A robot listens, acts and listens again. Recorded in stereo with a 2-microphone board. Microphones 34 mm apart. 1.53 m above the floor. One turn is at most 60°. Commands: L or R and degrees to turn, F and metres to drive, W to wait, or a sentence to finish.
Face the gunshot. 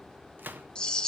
R60
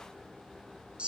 W
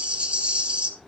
I heard a gunshot, but can't make it out now. It was about 10° right or 50° right.